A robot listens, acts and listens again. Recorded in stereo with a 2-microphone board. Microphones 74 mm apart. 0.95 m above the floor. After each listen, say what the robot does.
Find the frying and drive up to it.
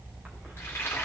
Turn 30° left.
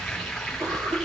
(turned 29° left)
Drive 1.0 m forward.
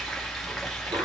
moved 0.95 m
Drive 1.0 m forward.
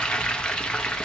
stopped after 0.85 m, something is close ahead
Turn 15° left.
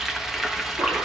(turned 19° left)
I am next to the frying.